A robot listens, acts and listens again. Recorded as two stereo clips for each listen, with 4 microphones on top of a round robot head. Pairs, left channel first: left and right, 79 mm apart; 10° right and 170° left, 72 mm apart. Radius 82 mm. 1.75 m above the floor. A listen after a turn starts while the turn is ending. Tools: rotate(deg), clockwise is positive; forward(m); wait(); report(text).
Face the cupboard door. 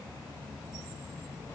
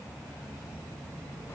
wait()
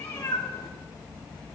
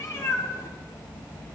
wait()
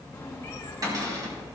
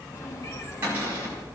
rotate(125)
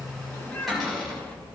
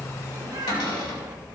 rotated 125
report("Facing the cupboard door.")